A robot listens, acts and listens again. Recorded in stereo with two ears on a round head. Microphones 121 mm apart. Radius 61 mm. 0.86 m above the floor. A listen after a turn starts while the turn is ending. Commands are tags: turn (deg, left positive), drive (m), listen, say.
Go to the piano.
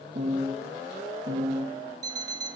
<turn deg="-50"/>
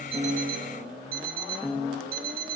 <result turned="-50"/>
<drive m="1.0"/>
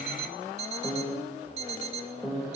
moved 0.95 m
<drive m="1.0"/>
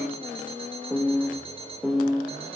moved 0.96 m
<drive m="1.0"/>
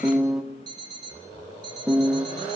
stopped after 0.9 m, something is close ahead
<say>I am next to the piano.</say>